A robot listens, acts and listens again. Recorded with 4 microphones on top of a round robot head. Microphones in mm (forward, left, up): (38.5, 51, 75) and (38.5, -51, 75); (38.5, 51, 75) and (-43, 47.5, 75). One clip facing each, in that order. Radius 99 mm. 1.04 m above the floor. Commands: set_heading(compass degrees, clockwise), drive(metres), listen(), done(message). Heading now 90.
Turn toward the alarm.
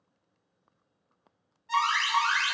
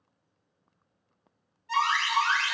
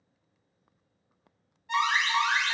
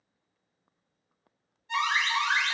set_heading(65)
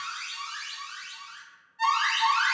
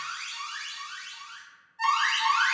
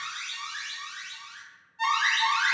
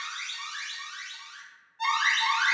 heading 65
done("Found it: an alarm, straight ahead.")